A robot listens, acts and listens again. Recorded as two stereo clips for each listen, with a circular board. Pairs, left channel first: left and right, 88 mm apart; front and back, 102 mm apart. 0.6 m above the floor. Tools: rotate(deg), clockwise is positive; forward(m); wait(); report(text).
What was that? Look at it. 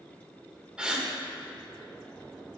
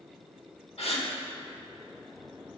rotate(10)
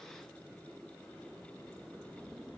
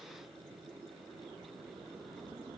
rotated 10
report("Facing where the gasp came from. I can't hear it now.")